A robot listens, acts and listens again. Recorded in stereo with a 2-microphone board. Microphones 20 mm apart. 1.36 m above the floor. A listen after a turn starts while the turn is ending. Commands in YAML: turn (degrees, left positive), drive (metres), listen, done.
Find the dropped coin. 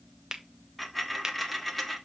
turn: 30
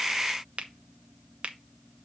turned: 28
listen: true
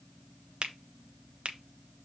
done: "I heard a dropped coin, but can't make it out now. It was about 25° right or 145° left."